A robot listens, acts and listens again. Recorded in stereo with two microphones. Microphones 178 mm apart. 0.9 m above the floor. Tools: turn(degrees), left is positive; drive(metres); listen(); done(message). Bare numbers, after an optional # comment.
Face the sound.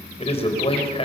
# The man speaking: about 35° left or 145° left.
turn(35)
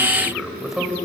done("Found it: a man speaking, straight ahead, over 4 m away.")